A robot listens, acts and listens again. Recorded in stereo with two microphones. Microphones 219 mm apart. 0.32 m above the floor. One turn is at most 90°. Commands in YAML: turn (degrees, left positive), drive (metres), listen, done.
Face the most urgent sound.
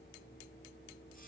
listen: true
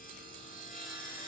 listen: true
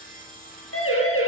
turn: 90
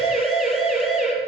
done: "Facing the siren, over 4 m away."